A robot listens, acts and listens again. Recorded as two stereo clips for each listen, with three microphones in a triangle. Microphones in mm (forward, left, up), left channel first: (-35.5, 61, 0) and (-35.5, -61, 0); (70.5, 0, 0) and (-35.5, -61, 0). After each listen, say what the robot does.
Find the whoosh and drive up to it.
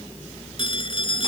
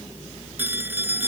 Keep listening.
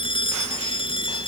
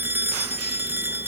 Keep listening.
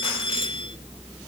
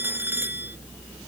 I can't make out a whoosh, only a phone ringing.